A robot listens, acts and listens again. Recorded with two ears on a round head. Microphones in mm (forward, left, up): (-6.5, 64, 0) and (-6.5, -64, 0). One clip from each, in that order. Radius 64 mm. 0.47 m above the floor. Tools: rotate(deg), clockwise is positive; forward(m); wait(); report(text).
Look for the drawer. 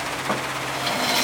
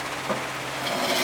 rotate(-30)
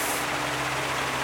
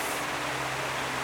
wait()
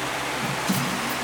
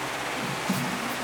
rotate(-135)
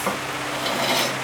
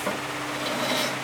rotate(-30)
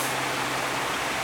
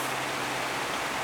wait()
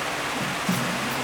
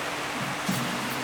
rotate(10)
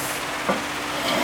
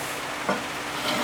report("Facing the drawer, under 1 m away.")